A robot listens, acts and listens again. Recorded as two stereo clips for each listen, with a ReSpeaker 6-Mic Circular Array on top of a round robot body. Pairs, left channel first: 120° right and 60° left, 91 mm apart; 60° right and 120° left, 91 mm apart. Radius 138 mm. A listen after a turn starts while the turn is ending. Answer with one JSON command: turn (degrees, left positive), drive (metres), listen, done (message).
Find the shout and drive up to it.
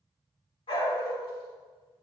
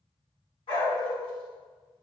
{"listen": true}
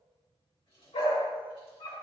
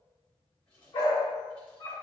{"listen": true}
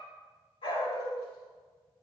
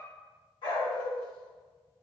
{"done": "I can't make out a shout to turn to."}